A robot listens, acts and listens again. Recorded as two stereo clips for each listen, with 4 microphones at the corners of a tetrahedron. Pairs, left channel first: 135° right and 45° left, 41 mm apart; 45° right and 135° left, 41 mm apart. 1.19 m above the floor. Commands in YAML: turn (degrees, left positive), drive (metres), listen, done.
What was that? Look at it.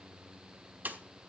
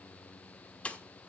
turn: 10
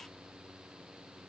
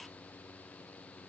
done: "Facing where the pop came from. I can't hear it now."